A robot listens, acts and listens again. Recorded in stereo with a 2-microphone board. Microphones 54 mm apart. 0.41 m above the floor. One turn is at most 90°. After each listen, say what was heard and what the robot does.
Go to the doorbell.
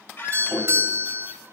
The doorbell: about 40° right or 140° right. Turn 40° right.
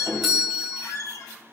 Drive 1.0 m forward.
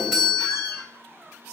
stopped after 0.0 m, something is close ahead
Something is in my way. I am facing the doorbell but have not reached it.